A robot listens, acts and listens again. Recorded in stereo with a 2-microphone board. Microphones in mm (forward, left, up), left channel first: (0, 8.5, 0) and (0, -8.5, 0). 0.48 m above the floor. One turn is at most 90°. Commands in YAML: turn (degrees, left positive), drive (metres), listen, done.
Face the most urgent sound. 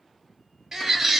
turn: -25
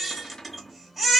done: "Found it: a baby crying, straight ahead."